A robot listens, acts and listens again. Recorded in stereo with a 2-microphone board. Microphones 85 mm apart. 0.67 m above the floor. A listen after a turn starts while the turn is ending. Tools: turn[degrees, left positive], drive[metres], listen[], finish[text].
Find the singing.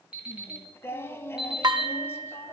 Thought: The singing: about 30° left or 150° left.
Action: turn[30]
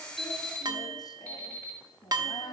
Thought: So it is at 120° left.
Action: turn[120]
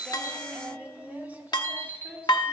Thought: The singing is now 20° right.
Action: turn[-20]
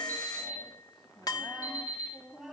Action: finish[Facing the singing.]